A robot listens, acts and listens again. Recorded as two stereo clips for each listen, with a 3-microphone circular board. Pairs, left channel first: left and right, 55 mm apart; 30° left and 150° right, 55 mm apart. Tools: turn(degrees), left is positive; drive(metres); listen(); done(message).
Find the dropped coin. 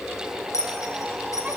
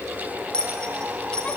turn(degrees=100)
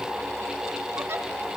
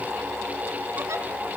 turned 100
done("I heard a dropped coin from this way, but can't make it out now.")